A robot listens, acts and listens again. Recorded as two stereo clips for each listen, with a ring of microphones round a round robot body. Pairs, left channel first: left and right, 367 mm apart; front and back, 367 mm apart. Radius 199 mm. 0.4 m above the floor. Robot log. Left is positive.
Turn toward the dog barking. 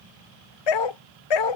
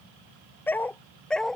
note: The dog barking: 90° left.
cmd yaw +90
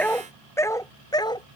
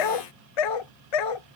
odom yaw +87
note: The dog barking is now 10° left.
cmd yaw +10
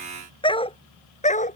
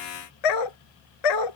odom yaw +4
note: The dog barking is now 20° left.
cmd yaw +20
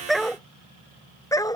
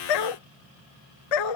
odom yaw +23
note: The dog barking is now 10° left.
cmd yaw +10
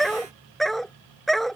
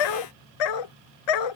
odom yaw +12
end: Facing the dog barking.